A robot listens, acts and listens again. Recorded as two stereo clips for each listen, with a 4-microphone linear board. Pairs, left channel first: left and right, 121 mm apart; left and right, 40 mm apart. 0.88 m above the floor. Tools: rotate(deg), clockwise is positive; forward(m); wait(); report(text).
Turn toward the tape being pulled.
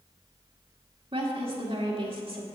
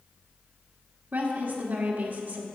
wait()
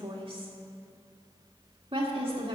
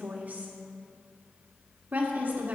wait()
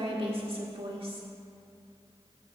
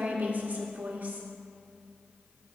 report("I can't make out tape being pulled to turn to.")